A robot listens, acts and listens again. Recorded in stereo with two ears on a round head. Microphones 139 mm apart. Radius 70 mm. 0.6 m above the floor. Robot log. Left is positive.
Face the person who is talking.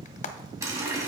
cmd idle
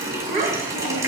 note: The child speaking: about 55° right or 125° right.
cmd yaw -55
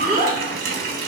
note: So it is at 70° right.
cmd yaw -70
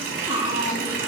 note: The child speaking is now 30° right.
cmd yaw -30
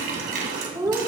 note: The child speaking is now 20° right.
cmd yaw -20
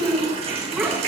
end: Found it: a child speaking, straight ahead.